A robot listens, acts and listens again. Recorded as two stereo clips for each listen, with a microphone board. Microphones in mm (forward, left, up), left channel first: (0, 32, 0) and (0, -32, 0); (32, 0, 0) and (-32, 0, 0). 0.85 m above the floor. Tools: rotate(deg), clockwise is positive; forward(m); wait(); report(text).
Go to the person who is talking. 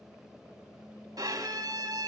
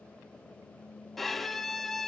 wait()
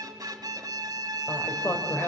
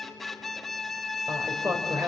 rotate(-140)
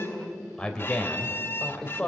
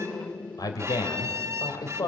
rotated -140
rotate(-10)
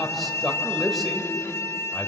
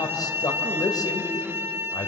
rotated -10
forward(1.0)
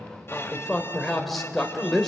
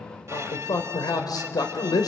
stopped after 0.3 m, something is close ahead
report("Blocked. The man speaking is further on, straight ahead.")